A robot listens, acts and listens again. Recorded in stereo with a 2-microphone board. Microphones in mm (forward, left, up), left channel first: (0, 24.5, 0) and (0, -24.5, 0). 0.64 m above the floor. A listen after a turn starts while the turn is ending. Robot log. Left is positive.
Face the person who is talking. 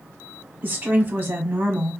note: The woman speaking: about 40° right or 140° right.
cmd yaw -40
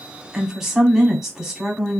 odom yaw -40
end: Found it: a woman speaking, straight ahead, 1 to 2 m away.